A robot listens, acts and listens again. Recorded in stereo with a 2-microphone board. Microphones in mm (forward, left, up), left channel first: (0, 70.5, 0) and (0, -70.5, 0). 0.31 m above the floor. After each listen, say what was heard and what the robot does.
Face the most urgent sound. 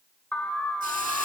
Turn 30° left.
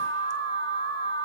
So it is at 145° left. Turn 145° left.
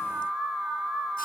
Facing the alarm.